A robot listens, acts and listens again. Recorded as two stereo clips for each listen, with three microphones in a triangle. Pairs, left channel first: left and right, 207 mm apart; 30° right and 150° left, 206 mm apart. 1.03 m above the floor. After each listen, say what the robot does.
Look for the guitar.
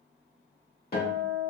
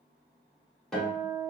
Turn 60° left.
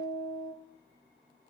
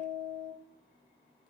Found it: a guitar, straight ahead, 1 to 2 m away.